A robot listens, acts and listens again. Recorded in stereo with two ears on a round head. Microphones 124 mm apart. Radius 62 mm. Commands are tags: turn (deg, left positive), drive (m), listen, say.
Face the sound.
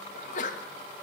<turn deg="55"/>
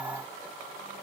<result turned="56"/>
<listen/>
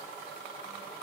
<say>I heard a sneeze, but can't make it out now. It was about straight ahead or 70° left.</say>